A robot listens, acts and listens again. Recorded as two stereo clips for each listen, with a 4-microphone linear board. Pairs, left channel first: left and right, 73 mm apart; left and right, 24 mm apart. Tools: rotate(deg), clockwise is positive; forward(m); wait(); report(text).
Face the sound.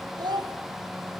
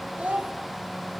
rotate(75)
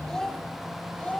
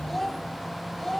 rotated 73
rotate(-15)
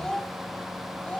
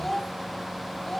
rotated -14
rotate(-20)
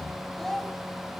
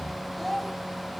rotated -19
report("Found it: a child speaking, straight ahead.")